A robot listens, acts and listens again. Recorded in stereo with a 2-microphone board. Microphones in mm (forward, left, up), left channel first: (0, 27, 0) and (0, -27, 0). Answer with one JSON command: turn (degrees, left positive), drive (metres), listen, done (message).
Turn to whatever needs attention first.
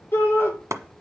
{"turn": 45}
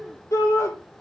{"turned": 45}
{"turn": 90}
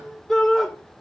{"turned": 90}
{"turn": 10}
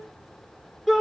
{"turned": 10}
{"done": "Found it: a shout, straight ahead, over 4 m away."}